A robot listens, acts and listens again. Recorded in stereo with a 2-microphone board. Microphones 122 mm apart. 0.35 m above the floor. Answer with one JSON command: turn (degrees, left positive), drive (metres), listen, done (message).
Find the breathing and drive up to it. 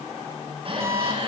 {"turn": -50}
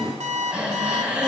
{"turn": -10}
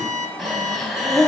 {"drive": 1.0}
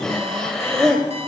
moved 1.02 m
{"drive": 1.0}
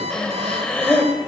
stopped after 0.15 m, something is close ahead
{"turn": 10}
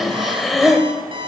{"done": "I am next to the breathing."}